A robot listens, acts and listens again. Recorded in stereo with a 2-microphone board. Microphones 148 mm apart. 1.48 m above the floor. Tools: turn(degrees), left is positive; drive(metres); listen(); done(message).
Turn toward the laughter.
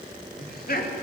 turn(degrees=70)
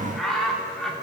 done("Facing the laughter.")